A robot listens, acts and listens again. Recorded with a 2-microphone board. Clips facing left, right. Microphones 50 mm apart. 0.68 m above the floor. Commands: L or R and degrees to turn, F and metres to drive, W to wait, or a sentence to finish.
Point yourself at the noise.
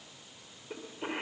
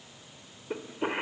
R25
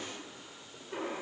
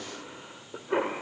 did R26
R130
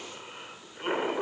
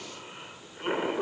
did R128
Found it: a cough, straight ahead, 1 to 2 m away.